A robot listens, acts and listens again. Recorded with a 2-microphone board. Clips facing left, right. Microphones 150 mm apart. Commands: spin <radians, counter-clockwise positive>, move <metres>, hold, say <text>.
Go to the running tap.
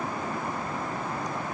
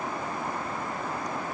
hold
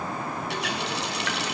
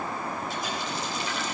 spin 1.13
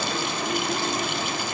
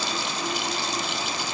spin 0.87
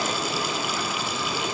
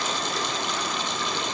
move 1.0
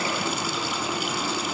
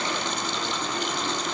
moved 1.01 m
move 1.0
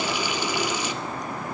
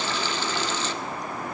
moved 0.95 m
spin 0.17
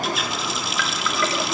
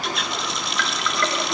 move 1.0
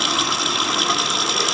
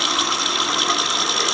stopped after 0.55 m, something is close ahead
say Arrived at the running tap, straight ahead.